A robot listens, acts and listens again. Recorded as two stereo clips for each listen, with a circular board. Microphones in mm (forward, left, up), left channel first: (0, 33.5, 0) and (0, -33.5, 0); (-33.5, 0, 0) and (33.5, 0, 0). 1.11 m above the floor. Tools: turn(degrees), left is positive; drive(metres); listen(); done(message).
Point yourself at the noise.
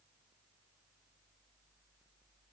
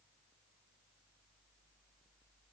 listen()
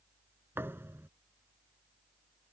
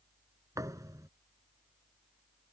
turn(degrees=-35)
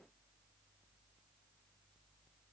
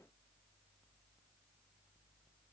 done("Facing where the thud came from. I can't hear it now.")